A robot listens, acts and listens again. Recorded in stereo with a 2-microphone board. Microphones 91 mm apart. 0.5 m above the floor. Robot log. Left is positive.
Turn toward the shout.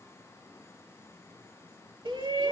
note: The shout: about 65° right or 115° right.
cmd yaw -65
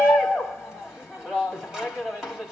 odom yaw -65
end: Facing the shout.